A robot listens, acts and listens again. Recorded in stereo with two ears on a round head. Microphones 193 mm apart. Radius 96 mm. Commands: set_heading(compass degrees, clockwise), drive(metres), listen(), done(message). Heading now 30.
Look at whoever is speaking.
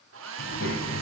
set_heading(340)
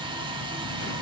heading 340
listen()
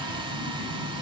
set_heading(265)
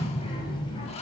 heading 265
set_heading(240)
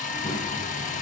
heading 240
set_heading(225)
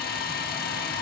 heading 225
listen()
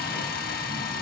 listen()
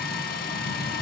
done("Found it: a child speaking, straight ahead, 2 to 4 m away.")